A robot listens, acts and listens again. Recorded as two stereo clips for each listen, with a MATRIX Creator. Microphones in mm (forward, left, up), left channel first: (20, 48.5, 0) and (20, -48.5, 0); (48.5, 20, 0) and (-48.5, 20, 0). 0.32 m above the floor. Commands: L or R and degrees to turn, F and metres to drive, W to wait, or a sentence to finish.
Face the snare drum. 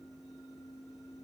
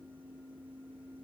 W
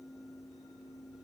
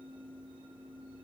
W
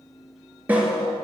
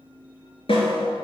R15
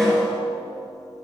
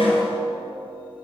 Facing the snare drum, 2 to 4 m away.